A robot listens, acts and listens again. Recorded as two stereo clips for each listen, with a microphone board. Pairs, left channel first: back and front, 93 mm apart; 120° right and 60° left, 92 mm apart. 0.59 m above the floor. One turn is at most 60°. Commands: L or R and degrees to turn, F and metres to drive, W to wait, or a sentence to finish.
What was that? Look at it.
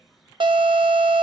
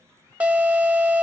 R15
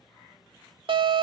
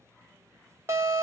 Facing the alarm, under 1 m away.